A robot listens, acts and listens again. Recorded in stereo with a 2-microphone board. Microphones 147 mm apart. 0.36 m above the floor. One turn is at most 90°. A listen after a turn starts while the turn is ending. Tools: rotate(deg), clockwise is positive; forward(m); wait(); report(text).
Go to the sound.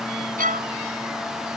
rotate(70)
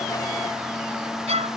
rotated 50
rotate(50)
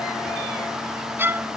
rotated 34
rotate(15)
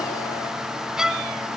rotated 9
forward(1.0)
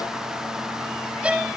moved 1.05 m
rotate(10)
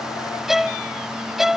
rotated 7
forward(1.0)
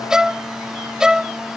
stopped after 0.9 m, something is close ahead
report("I am next to the violin.")